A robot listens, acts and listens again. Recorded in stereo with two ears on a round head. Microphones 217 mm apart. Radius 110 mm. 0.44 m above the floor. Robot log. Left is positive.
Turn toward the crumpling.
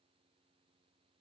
cmd idle
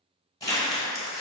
note: The crumpling: about 15° left or 165° left.
cmd yaw +15
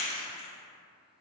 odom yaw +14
note: So it is at 150° left.
cmd yaw +150
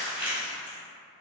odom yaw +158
end: Facing the crumpling.